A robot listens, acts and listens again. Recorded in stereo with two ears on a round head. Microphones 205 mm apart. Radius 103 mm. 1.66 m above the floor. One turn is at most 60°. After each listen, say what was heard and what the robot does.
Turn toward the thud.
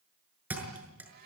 Turn 30° right.
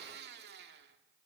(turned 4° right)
Keep listening.
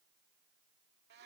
I heard a thud, but can't make it out now. It was about 5° right or 170° right.